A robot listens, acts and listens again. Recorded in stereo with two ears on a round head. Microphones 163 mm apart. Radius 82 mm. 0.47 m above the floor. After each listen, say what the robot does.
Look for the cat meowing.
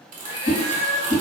Turn 20° right.
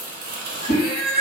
Found it: a cat meowing, straight ahead.